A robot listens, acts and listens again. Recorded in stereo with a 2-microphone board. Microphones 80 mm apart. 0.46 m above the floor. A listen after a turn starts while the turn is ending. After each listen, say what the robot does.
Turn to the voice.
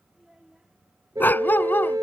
Turn 30° right.
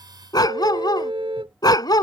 Keep listening.
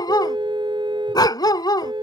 Keep listening.
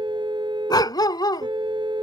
I heard a child speaking, but can't make it out now. It was about 25° left or 145° right.